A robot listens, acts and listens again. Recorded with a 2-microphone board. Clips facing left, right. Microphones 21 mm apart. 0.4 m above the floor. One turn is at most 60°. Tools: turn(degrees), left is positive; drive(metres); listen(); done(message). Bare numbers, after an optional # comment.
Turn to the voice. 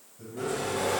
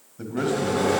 # The man speaking: about 60° right or 120° right.
turn(-60)
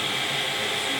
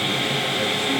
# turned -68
listen()
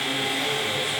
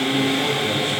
listen()
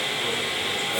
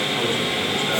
done("I heard a man speaking, but can't make it out now. It was about 10° left or 55° right.")